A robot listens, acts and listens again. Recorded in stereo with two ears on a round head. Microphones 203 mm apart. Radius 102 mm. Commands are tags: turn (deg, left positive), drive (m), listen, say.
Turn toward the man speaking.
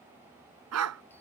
<listen/>
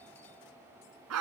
<listen/>
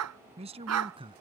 <turn deg="-25"/>
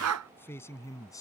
<turn deg="15"/>
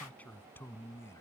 <turn deg="15"/>
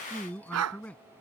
<say>Found it: a man speaking, straight ahead.</say>